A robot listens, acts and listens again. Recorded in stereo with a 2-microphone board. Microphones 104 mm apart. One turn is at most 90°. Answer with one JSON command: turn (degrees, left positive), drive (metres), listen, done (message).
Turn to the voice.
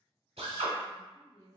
{"turn": 35}
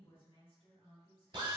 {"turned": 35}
{"turn": 90}
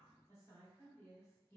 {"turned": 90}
{"turn": 30}
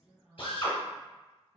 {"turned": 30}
{"done": "Facing the woman speaking."}